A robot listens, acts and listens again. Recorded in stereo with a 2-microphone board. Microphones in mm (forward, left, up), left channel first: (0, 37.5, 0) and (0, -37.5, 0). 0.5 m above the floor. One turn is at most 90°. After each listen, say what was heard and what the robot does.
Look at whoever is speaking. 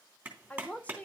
The woman speaking: about 20° left or 160° left. Turn 20° left.
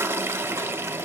Keep listening.
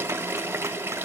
Keep listening.
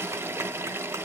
I heard a woman speaking, but can't make it out now. It was about straight ahead or 140° left.